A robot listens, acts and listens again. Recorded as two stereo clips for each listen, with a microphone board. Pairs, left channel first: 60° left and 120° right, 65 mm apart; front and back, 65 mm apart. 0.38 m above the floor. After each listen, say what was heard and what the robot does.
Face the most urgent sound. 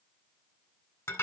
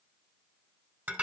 Keep listening.
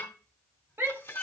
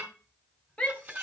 The shout: 70° right. Turn 70° right.
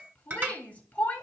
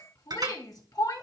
Facing the shout.